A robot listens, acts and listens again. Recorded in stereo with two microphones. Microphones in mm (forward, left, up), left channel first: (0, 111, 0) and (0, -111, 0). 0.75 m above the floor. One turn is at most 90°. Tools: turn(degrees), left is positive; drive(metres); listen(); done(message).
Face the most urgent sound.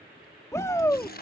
turn(degrees=30)
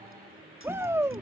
turn(degrees=-15)
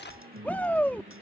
turn(degrees=10)
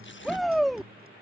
done("Facing the shout.")